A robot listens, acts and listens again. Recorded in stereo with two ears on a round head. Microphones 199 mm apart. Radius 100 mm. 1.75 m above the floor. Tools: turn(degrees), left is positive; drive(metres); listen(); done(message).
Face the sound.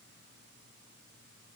listen()
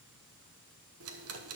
turn(degrees=-70)
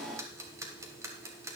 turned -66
turn(degrees=-15)
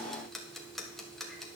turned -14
done("Found it: ticking, straight ahead.")